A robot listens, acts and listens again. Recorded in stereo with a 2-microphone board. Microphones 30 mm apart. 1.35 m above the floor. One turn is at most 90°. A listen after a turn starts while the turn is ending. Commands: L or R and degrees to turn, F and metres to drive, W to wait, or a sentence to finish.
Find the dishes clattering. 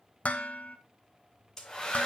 L55
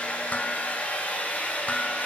W
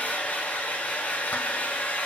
W
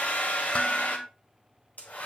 L60
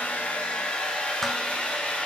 W
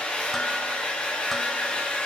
W
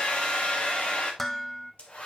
Facing the dishes clattering.